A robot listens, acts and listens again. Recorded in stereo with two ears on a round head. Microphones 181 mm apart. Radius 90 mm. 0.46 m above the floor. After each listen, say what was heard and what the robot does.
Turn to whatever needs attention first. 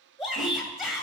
Turn 30° right.
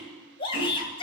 So it is at 25° left. Turn 25° left.
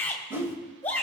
The shout is now 10° left. Turn 10° left.
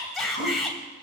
Found it: a shout, straight ahead.